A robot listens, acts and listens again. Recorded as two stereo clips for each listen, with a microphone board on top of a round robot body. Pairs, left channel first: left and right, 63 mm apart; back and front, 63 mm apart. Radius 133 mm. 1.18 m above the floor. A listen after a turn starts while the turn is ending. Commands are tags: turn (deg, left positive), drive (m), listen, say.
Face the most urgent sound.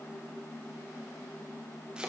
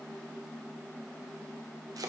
<listen/>
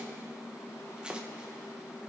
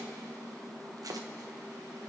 <listen/>
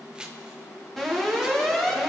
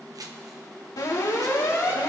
<turn deg="175"/>
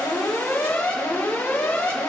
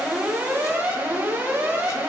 <turn deg="45"/>
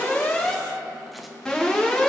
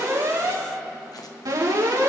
<turn deg="10"/>
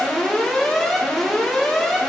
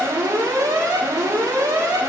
<say>Facing the alarm, 2 to 4 m away.</say>